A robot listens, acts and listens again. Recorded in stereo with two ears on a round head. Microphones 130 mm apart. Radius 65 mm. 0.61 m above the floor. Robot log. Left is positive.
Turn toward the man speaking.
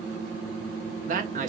note: The man speaking: about 55° right or 125° right.
cmd yaw -55
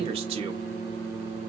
cmd idle
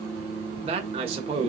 note: So it is at 50° right.
cmd yaw -50
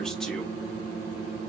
cmd idle
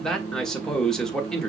end: Found it: a man speaking, straight ahead.